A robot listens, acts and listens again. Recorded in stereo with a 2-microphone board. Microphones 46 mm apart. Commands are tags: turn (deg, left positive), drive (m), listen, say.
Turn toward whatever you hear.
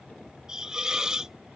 <turn deg="-30"/>
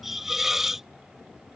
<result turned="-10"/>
<turn deg="-30"/>
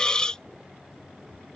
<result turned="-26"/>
<turn deg="20"/>
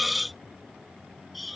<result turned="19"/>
<say>Found it: a hiss, straight ahead.</say>